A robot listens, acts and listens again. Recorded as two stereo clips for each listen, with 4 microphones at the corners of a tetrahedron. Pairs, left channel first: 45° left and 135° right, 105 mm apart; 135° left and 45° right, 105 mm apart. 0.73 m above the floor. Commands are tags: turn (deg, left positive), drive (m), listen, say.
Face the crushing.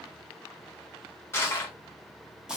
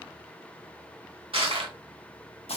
<turn deg="-20"/>
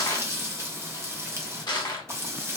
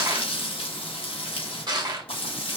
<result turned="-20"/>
<say>Found it: crushing, straight ahead, under 1 m away.</say>